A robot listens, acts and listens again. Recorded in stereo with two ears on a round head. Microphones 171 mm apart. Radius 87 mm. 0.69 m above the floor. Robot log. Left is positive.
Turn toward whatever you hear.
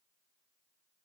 cmd idle
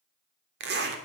note: The zipper: about 60° right or 120° right.
cmd yaw -60
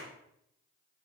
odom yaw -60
cmd idle
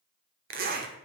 note: So it is at 50° right.
cmd yaw -50
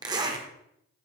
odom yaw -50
note: The zipper is now 20° right.
cmd yaw -20
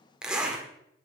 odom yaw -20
end: Found it: a zipper, straight ahead.